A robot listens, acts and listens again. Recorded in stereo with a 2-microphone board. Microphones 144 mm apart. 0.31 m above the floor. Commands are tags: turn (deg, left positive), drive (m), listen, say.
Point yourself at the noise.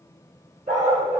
<turn deg="-60"/>
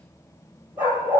<turn deg="-10"/>
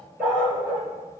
<turn deg="-10"/>
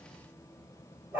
<turn deg="-15"/>
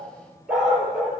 <say>Found it: a dog barking, straight ahead, 2 to 4 m away.</say>